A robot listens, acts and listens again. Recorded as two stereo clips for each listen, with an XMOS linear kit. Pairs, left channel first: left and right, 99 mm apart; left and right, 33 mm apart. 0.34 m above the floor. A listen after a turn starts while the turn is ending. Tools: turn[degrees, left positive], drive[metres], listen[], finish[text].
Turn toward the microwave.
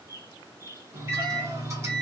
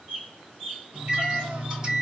Thought: The microwave: about 30° right or 150° right.
Action: turn[-30]
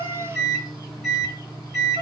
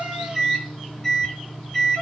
Action: finish[Found it: a microwave, straight ahead.]